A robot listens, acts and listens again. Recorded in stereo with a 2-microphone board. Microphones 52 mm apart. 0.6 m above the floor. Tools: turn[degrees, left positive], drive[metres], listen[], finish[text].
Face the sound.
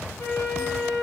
Thought: The flute: about 55° left or 125° left.
Action: turn[55]
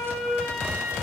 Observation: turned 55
Action: finish[Facing the flute.]